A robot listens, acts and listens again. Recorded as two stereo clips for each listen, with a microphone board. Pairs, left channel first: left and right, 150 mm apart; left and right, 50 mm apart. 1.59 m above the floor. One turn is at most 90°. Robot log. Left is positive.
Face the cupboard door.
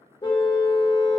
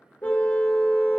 cmd idle
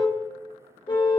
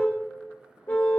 cmd idle
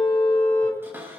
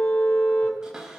cmd yaw -30
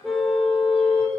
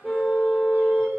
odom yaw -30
cmd idle
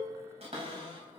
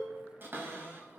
note: So it is at 135° right.
cmd yaw -90
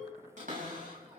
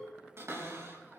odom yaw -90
note: The cupboard door is now 60° right.
cmd yaw -60
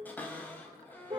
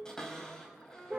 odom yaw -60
note: The cupboard door is now 15° left.
cmd yaw +15
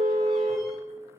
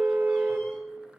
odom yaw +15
cmd idle
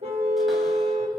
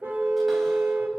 cmd idle
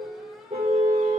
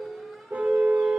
end: I heard a cupboard door from this way, but can't make it out now.